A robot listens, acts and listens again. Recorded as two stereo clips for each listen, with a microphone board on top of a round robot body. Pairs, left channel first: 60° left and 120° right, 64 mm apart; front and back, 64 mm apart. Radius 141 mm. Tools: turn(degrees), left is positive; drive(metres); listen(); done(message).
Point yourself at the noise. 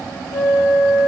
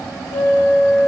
turn(degrees=10)
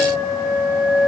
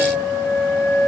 done("Facing the flute, 1 to 2 m away.")